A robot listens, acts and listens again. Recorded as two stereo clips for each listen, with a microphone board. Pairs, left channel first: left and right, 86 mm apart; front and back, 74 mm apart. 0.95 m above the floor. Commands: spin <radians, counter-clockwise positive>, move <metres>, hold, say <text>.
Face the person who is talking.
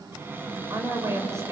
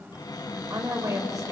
spin -2.53
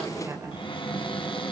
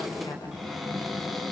spin -0.52
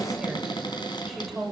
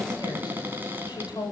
say Facing the woman speaking, over 4 m away.